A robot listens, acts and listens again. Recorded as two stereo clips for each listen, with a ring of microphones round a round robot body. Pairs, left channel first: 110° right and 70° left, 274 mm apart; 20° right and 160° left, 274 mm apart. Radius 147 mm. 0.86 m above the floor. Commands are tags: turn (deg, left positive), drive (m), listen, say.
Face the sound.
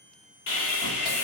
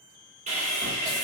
<turn deg="-140"/>
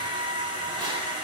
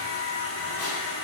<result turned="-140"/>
<say>Found it: sawing, straight ahead.</say>